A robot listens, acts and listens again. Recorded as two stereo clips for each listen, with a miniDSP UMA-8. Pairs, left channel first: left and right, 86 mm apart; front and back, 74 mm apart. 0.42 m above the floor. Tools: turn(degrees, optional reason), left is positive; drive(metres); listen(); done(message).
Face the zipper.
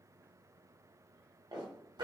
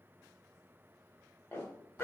turn(degrees=-60, reason="The zipper: 60° right.")
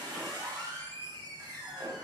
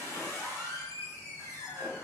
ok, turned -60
listen()
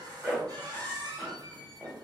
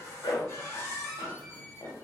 turn(degrees=-10, reason="The zipper is now 10° right.")
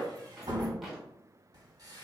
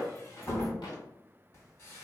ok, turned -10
done("Found it: a zipper, straight ahead, under 1 m away.")